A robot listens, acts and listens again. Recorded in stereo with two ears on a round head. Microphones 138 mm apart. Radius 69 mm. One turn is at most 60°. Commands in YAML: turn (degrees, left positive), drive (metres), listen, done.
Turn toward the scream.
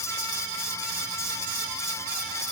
listen: true
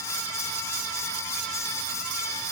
listen: true
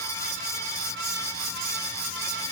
done: "I can't make out a scream to turn to."